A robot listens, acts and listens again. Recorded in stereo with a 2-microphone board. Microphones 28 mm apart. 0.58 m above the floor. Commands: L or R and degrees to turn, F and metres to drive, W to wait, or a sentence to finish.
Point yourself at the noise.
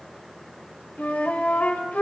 L90
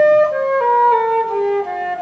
Facing the flute.